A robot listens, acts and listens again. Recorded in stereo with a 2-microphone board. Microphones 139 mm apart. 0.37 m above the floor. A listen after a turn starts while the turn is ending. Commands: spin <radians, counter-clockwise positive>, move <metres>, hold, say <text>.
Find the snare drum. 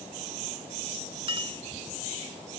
hold
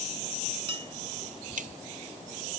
spin -1.22
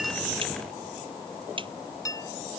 spin -0.70
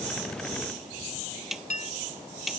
say Facing the snare drum.